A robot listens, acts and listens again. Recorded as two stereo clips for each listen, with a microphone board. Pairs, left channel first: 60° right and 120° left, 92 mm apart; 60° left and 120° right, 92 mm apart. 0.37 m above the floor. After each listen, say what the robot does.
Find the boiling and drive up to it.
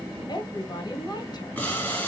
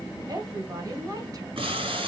Turn 130° right.
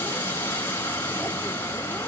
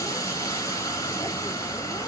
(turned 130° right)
Turn 10° left.
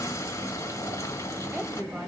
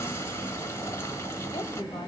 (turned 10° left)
Drive 1.0 m forward.
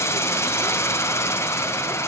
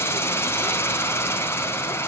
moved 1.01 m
Drive 1.0 m forward.
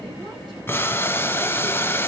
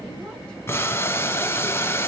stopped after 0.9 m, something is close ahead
I am next to the boiling.